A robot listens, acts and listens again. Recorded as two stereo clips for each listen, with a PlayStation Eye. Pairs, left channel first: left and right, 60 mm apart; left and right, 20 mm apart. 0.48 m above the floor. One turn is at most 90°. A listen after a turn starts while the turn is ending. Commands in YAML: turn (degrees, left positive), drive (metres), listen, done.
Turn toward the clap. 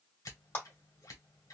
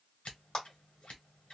turn: 35
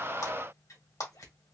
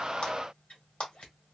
turn: 90
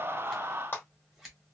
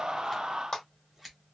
turn: 35
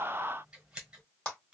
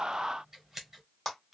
turn: 20
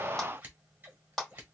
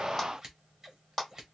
done: "Facing the clap, 2 to 4 m away."